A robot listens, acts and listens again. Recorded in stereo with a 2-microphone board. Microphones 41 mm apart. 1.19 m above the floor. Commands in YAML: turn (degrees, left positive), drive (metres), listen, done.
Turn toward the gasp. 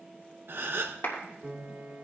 turn: -65
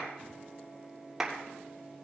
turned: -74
listen: true
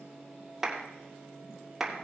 done: "I heard a gasp, but can't make it out now. It was about 10° left or 45° right."